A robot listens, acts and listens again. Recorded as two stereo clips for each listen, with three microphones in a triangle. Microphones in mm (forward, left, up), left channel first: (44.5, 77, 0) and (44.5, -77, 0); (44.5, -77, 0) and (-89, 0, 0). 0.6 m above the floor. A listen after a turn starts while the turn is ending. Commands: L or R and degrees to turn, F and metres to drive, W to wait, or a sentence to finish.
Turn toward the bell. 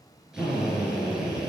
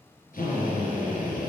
W
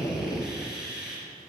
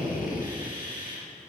W
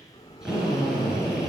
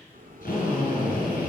L140
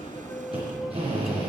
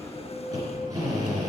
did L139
Facing the bell, under 1 m away.